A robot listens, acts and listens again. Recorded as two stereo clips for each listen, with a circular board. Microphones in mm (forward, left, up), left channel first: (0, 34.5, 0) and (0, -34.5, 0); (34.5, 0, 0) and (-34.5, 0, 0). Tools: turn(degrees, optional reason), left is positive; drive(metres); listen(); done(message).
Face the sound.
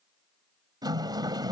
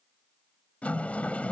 turn(degrees=-70, reason="The sliding door: 70° right.")
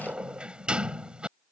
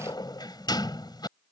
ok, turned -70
turn(degrees=-10, reason="The sliding door is now 10° right.")
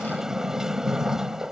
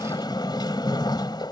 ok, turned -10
done("Facing the sliding door.")